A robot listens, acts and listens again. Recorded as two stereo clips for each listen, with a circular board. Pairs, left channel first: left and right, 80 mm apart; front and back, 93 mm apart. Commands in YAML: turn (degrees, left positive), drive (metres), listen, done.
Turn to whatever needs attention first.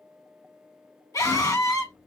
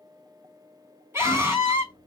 turn: 120
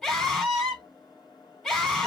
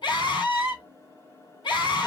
done: "Facing the scream."